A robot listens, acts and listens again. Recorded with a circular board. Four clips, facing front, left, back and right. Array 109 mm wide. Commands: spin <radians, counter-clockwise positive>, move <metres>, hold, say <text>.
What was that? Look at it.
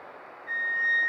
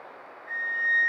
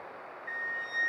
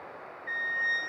spin -1.31
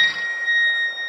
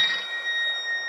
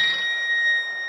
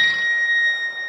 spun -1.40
say Facing the flute.